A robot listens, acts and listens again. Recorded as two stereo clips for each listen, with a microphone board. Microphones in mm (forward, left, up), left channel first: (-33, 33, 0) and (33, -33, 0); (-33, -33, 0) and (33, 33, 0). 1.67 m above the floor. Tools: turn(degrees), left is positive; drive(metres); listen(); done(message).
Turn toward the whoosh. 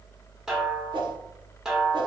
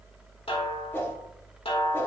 turn(degrees=-70)
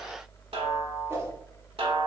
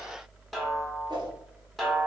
turn(degrees=15)
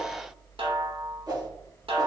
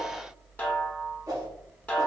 done("Found it: a whoosh, straight ahead.")